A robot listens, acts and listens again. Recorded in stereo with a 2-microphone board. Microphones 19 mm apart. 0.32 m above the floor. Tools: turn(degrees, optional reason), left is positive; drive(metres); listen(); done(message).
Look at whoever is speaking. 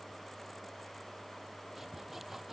listen()
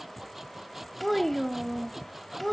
turn(degrees=30)
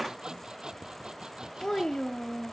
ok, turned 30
turn(degrees=140, reason="So it is at 140° left.")
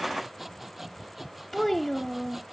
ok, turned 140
turn(degrees=15, reason="The child speaking is now 15° left.")
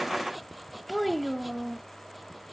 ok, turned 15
done("Facing the child speaking.")